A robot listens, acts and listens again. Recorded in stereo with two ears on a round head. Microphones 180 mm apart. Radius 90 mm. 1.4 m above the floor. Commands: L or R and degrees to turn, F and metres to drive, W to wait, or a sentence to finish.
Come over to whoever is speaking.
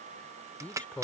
L30
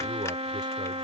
W
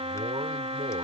W
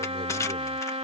I heard a man speaking, but can't make it out now. It was about 20° right or 140° left. I did not reach it.